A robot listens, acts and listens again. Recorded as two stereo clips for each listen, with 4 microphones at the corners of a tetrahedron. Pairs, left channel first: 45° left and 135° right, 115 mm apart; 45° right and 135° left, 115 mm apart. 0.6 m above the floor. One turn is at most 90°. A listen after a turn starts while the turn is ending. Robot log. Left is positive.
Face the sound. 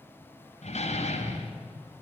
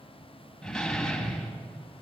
note: The door slam: 40° left.
cmd yaw +40
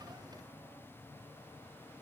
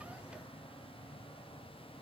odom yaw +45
end: I heard a door slam from this way, but can't make it out now.